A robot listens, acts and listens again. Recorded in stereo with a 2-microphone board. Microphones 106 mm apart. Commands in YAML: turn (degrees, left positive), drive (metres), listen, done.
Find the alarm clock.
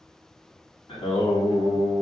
listen: true
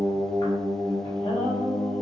listen: true
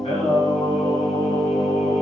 done: "I can't make out an alarm clock, only singing."